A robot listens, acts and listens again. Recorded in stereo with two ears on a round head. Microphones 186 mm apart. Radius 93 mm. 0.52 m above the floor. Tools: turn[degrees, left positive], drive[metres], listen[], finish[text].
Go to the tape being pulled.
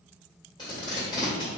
Thought: The tape being pulled: about 25° left or 155° left.
Action: turn[25]
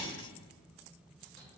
Action: listen[]
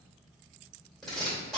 Action: drive[1.0]
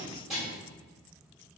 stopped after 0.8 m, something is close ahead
Action: finish[I am next to the tape being pulled.]